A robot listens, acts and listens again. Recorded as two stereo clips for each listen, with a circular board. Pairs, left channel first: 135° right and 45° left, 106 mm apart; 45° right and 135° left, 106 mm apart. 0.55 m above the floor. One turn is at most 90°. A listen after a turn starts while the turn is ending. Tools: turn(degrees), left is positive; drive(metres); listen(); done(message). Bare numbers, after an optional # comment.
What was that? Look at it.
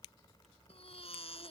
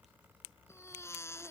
# The baby crying: 110° right.
turn(-90)
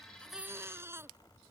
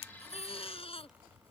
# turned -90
# The baby crying is now 20° right.
turn(-20)
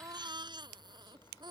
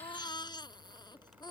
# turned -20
done("Facing the baby crying.")